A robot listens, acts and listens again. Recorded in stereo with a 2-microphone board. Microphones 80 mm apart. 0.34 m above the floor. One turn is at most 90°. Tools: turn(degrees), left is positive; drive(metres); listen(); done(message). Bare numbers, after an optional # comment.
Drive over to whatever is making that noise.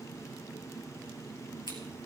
# The scissors: about 65° left or 115° left.
turn(65)
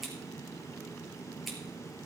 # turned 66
drive(1.0)
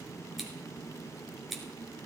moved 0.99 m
drive(1.0)
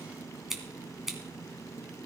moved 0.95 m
drive(1.0)
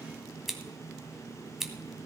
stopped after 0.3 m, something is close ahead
done("Arrived at the scissors, straight ahead.")